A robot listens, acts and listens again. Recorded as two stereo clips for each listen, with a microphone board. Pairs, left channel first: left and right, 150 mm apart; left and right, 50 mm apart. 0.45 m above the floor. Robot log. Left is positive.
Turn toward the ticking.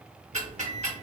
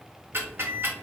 note: The ticking: about 50° right or 130° right.
cmd yaw -50
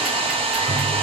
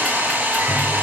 cmd idle
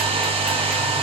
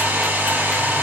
cmd idle
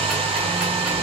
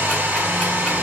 end: I heard ticking, but can't make it out now. It was about straight ahead or 80° right.